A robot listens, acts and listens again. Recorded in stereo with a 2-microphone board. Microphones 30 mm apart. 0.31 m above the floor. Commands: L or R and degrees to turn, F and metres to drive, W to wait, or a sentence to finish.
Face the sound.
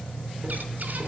W
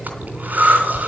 R65
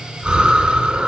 R35
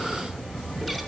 Facing the breathing.